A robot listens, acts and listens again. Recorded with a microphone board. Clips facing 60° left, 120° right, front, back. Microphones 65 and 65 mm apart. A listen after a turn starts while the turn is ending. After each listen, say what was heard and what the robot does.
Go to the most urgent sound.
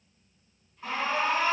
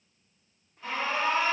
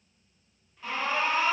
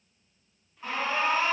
The alarm: 115° left. Turn 115° left.
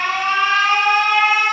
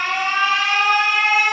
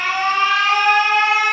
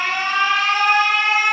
Drive 1.0 m forward.
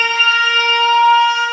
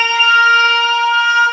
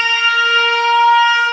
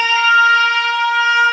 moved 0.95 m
The alarm is now 15° left. Turn 15° left.
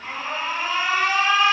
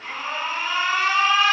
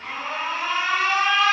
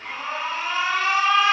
Drive 1.0 m forward.
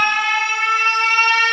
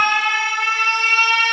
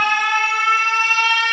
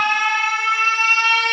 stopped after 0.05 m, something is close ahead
Arrived at the alarm, straight ahead.